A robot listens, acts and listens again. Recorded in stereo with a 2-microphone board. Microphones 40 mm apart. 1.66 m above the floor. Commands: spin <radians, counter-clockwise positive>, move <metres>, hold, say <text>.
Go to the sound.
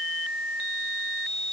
hold
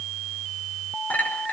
spin 0.79
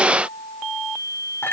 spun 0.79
spin 1.48
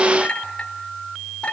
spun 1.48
spin 0.44
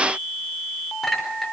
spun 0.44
move 1.0
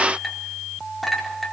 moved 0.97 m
move 1.0
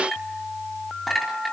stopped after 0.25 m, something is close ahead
say Blocked. The clink is further on, straight ahead.